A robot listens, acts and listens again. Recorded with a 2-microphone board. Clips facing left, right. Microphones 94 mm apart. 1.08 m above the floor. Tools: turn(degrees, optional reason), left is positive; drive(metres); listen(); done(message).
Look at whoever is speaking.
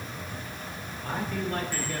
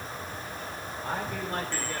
turn(degrees=-20, reason="The man speaking: about 20° right or 160° right.")
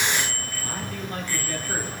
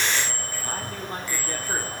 listen()
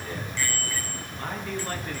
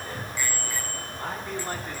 turn(degrees=-30)
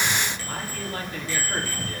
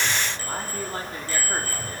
turn(degrees=-30, reason="The man speaking: about 30° right or 150° right.")
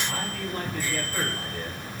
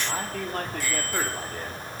turn(degrees=-125, reason="So it is at 125° right.")
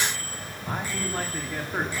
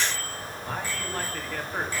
turn(degrees=10, reason="The man speaking is now 10° left.")
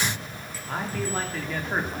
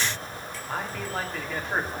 done("Found it: a man speaking, straight ahead, 2 to 4 m away.")